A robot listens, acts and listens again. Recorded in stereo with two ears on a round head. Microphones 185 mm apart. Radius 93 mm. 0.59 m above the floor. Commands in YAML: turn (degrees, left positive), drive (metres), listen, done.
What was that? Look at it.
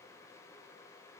listen: true
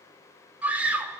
turn: -30
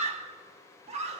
turn: -140
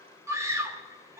turn: -15
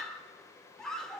done: "Facing the scream."